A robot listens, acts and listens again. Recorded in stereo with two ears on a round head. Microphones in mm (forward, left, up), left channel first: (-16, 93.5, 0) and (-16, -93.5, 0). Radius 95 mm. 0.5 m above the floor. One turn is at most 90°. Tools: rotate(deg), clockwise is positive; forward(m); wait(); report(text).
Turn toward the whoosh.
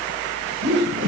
rotate(65)
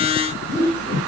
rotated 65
rotate(50)
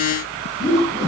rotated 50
rotate(20)
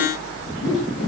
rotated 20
report("Facing the whoosh.")